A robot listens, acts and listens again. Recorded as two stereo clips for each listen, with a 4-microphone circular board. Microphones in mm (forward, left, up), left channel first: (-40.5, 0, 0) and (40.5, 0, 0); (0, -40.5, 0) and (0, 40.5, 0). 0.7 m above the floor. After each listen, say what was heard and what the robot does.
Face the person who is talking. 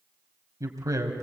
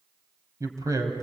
The man speaking: 45° left. Turn 45° left.
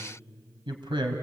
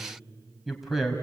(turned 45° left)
Found it: a man speaking, straight ahead.